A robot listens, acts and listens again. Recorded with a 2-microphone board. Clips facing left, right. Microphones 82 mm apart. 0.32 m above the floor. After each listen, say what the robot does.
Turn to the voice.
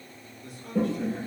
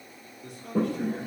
Turn 60° right.
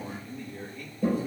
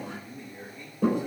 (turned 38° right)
Turn 25° right.
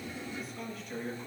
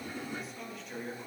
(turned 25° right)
Facing the man speaking.